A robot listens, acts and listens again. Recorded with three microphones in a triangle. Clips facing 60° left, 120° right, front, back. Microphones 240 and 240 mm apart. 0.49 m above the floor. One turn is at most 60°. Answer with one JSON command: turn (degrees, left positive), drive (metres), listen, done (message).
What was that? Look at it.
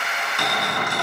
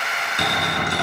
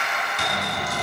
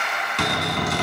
{"turn": 60}
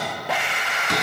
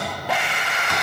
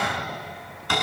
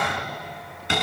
{"turn": 60}
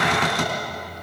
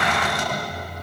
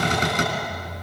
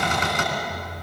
{"turn": 55}
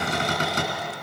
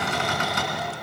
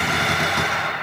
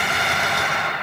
{"done": "Facing the cupboard door, 2 to 4 m away."}